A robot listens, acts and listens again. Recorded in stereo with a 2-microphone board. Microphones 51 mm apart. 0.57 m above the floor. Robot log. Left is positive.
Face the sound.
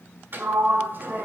note: The sliding door: about 45° right or 135° right.
cmd yaw -45
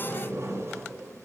note: So it is at 90° right.
cmd yaw -90
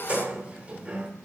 note: The sliding door is now 25° right.
cmd yaw -25
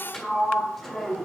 note: The sliding door is now 10° left.
cmd yaw +10
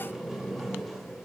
end: Found it: a sliding door, straight ahead, 1 to 2 m away.